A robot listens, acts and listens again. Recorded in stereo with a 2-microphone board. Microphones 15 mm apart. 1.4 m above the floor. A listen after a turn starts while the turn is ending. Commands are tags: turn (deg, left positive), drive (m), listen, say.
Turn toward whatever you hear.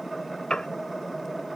<turn deg="60"/>
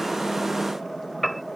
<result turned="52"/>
<say>Found it: a piano, straight ahead.</say>